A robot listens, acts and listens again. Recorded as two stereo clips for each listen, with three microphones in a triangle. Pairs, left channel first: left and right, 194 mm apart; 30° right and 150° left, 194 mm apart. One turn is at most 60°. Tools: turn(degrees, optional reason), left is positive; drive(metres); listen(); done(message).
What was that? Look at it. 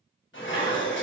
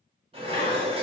turn(degrees=60, reason="The dishes clattering: 90° left.")
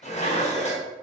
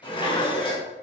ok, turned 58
turn(degrees=35, reason="The dishes clattering is now 35° left.")
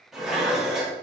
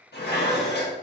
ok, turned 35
done("Facing the dishes clattering, under 1 m away.")